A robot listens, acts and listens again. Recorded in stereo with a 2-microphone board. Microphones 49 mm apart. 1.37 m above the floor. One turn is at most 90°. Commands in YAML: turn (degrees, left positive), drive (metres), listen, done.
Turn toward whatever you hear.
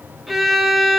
turn: -30
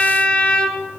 turn: 25
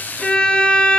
turn: 25
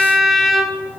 done: "Facing the violin, under 1 m away."